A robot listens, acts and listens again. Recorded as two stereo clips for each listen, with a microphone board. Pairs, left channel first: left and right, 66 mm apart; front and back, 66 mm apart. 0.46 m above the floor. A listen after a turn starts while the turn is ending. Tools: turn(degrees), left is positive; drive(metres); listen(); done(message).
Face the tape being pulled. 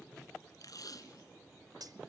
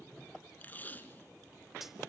turn(degrees=60)
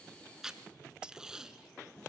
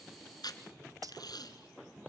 turn(degrees=-10)
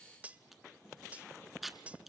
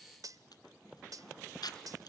done("Facing the tape being pulled, 1 to 2 m away.")